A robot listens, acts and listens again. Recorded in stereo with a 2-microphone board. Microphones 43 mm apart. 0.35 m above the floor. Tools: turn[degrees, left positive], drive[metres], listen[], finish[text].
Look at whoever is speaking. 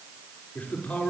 Thought: The man speaking: about 45° left or 135° left.
Action: turn[45]
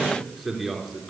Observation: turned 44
Action: finish[Found it: a man speaking, straight ahead, over 4 m away.]